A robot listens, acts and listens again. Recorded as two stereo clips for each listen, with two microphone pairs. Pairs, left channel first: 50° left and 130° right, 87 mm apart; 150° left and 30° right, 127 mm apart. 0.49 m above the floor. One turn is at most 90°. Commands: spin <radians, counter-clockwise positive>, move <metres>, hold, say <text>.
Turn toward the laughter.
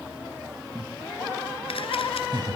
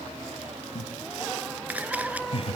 spin -1.57
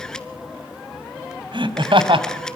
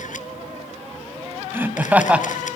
spin -1.57
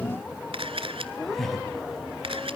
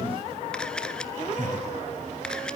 spin -0.61
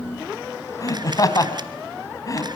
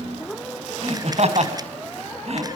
say Facing the laughter.